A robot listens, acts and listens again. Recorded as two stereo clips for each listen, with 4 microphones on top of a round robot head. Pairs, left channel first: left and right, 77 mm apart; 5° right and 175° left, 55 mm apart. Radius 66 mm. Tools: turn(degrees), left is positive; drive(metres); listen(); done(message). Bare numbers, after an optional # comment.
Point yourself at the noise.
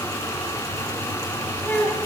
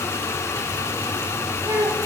# The child speaking: 160° left.
turn(160)
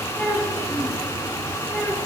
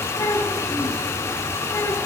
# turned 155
# The child speaking is now 15° left.
turn(15)
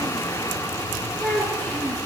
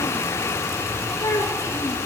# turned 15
# The child speaking is now 20° left.
turn(20)
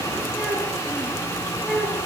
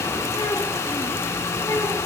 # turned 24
done("Found it: a child speaking, straight ahead.")